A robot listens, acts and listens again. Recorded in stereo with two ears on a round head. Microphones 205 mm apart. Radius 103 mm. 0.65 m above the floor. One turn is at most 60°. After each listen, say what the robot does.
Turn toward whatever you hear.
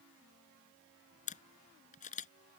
Turn 35° left.
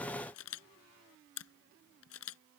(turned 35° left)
Turn 60° left.
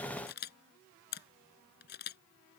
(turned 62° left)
Turn 50° left.
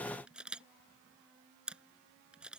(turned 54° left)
Facing the camera shutter.